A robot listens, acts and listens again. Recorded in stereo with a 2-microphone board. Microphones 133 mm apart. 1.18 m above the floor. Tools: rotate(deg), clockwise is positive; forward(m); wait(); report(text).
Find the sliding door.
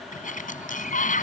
rotate(-90)
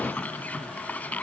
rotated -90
rotate(-10)
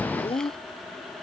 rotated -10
wait()
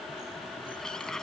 report("Facing the sliding door.")